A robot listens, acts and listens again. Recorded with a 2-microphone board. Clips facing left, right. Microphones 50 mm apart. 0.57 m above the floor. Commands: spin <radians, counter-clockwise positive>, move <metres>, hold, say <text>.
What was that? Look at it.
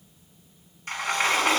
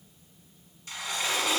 spin 0.79
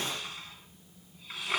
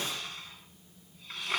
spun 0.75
say Facing the sliding door.